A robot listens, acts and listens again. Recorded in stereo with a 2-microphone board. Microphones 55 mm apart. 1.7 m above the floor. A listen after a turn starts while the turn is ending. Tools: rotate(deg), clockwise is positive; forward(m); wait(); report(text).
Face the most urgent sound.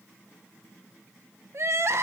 rotate(55)
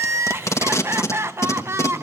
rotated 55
rotate(60)
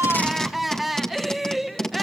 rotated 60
report("Found it: crying, straight ahead, 1 to 2 m away.")